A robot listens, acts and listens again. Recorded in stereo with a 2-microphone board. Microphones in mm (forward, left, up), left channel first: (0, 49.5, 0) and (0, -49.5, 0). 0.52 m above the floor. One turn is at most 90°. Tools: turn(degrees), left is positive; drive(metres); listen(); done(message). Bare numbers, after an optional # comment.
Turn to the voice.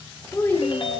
# The child speaking: about 25° left or 155° left.
turn(25)
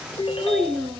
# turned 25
done("Found it: a child speaking, straight ahead, under 1 m away.")